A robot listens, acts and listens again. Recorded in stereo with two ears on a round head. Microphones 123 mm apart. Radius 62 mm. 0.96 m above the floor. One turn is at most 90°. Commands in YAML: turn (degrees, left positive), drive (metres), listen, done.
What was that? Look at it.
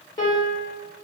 turn: 30
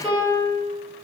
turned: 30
done: "Found it: a piano, straight ahead."